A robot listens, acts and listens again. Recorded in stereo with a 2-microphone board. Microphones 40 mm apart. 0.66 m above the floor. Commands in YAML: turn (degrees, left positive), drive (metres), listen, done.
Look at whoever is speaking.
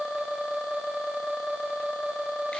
listen: true
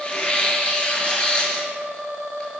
listen: true
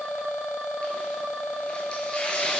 done: "I can't make out anyone speaking to turn to."